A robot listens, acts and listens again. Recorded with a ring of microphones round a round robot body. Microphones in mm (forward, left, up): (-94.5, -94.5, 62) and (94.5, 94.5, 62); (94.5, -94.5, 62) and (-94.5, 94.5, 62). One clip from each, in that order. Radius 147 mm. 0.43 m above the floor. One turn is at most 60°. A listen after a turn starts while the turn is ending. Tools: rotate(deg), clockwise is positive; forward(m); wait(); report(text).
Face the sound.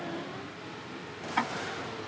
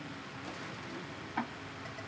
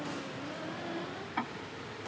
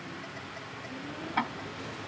rotate(60)
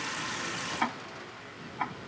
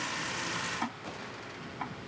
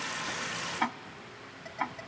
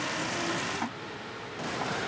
rotate(60)
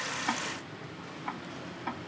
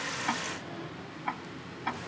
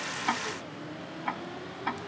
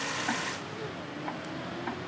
rotate(15)
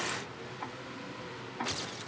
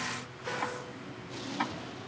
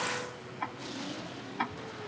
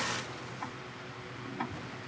report("Found it: ticking, straight ahead.")